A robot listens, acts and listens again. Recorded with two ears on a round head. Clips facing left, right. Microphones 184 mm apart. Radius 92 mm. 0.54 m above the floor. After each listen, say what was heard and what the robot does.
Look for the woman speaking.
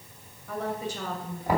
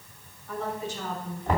The woman speaking: about 70° left or 110° left. Turn 70° left.
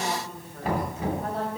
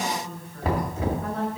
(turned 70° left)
So it is at 30° left. Turn 30° left.
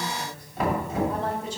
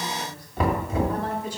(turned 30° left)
The woman speaking is now 25° left. Turn 25° left.
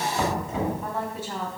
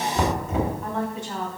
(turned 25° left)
Facing the woman speaking.